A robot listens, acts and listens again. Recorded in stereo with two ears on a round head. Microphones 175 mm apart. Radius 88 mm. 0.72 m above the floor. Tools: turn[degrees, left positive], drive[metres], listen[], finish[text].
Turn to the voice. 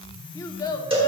Thought: The child speaking: about 15° left or 165° left.
Action: turn[15]
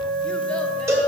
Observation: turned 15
Action: listen[]
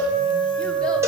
Action: listen[]
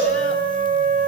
Action: finish[I heard a child speaking, but can't make it out now. It was about straight ahead or 150° left.]